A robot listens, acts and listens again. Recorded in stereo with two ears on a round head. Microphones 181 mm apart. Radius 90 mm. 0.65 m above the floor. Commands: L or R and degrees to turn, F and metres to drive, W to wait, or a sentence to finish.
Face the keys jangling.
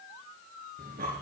W
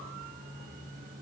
W
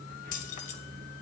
L40
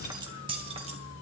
R30
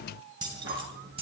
R30
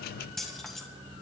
Found it: keys jangling, straight ahead.